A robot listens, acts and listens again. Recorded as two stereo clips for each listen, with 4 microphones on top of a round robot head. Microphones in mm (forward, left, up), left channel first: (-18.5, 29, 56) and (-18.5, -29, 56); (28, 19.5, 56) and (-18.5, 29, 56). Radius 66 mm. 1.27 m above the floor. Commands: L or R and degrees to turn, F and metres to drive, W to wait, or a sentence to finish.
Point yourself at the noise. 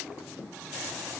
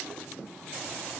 W
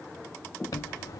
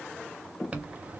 L110
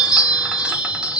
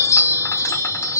R15
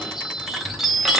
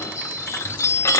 Found it: a chime, straight ahead, under 1 m away.